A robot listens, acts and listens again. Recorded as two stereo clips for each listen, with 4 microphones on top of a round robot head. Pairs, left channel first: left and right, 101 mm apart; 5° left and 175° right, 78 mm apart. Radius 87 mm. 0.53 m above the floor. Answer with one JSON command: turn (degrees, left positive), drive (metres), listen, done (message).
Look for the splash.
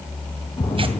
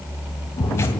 {"turn": 30}
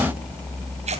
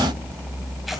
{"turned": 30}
{"done": "Facing where the splash came from. I can't hear it now."}